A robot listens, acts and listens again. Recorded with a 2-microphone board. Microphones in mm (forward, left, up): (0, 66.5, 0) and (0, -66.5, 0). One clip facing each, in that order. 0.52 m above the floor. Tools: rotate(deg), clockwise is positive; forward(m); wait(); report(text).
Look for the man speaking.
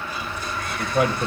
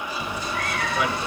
rotate(-45)
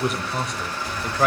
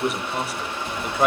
rotate(10)
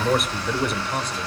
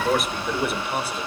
report("Facing the man speaking, 1 to 2 m away.")